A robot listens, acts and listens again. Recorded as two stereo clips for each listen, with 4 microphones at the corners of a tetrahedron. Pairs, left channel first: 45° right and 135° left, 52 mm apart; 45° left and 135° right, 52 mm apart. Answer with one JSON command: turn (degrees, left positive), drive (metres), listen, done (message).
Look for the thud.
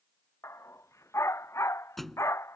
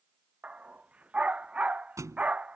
{"turn": -135}
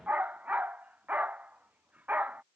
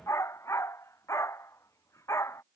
{"done": "I heard a thud from this way, but can't make it out now."}